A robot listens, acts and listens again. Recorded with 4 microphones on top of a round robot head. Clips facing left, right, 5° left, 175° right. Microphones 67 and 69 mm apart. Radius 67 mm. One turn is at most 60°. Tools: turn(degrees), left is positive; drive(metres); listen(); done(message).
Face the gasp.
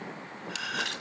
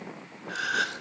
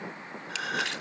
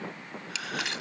turn(degrees=-55)
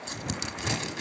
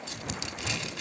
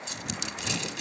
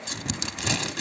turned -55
done("Facing where the gasp came from. I can't hear it now.")